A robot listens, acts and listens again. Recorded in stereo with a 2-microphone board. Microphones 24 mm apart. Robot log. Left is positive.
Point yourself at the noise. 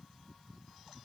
cmd idle
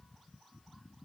cmd idle
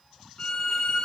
note: The violin: about 35° left or 145° left.
cmd yaw +35
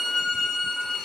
note: So it is at 10° left.
cmd yaw +10
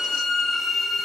end: Facing the violin.